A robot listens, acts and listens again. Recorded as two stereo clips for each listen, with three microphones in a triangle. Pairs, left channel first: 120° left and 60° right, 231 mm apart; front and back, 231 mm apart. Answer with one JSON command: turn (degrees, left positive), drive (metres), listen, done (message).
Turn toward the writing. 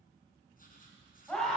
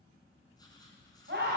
{"turn": 70}
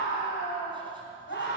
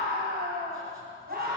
{"listen": true}
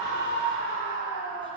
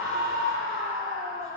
{"listen": true}
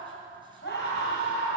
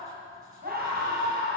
{"done": "Facing where the writing came from. I can't hear it now."}